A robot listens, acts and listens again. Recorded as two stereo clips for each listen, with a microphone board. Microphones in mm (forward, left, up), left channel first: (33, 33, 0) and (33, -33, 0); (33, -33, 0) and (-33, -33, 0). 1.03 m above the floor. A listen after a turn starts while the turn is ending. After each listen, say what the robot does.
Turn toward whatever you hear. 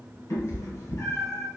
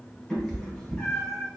Turn 65° left.
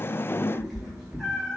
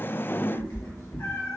Turn 15° right.
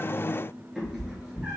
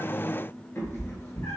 Turn 25° right.
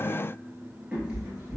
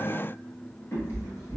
Turn 25° right.
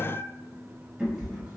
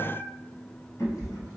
Turn 20° right.
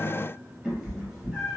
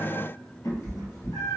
Facing the cat meowing.